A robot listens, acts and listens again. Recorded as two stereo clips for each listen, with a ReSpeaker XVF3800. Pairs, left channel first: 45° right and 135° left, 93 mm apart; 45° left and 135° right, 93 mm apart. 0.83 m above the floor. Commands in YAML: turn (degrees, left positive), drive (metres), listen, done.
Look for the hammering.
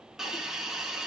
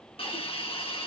listen: true
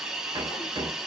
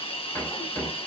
turn: 105
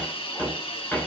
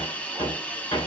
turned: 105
turn: 25
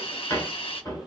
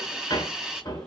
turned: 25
done: "Found it: hammering, straight ahead, 2 to 4 m away."